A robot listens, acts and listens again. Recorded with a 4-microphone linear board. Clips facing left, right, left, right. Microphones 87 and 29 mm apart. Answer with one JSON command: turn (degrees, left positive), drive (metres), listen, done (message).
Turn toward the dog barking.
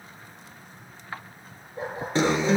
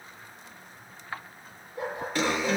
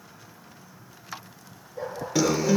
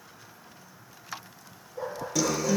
{"turn": 40}
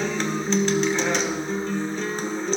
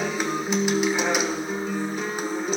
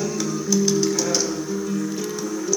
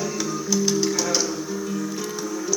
{"listen": true}
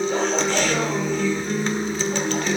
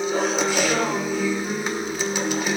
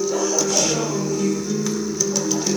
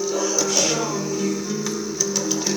{"listen": true}
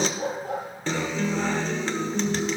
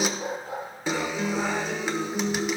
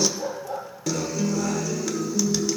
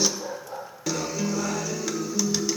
{"turn": 100}
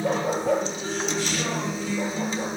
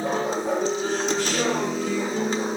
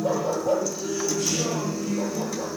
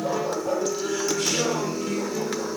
{"turn": -25}
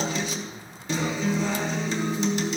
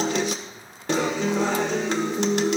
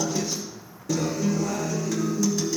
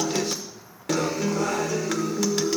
{"listen": true}
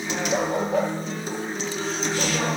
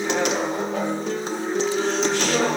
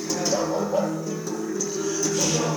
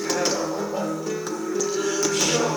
{"done": "Found it: a dog barking, straight ahead, over 4 m away."}